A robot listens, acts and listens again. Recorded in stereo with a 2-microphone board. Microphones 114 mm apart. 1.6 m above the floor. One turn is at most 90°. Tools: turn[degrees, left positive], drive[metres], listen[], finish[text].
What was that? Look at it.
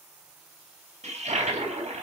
Thought: The toilet flushing: about 65° right or 115° right.
Action: turn[-65]
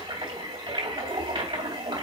Thought: So it is at 45° right.
Action: turn[-45]
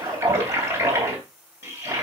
Thought: The toilet flushing is now 25° right.
Action: turn[-25]
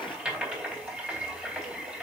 Thought: The toilet flushing is now 10° right.
Action: turn[-10]
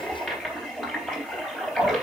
Action: finish[Facing the toilet flushing, 2 to 4 m away.]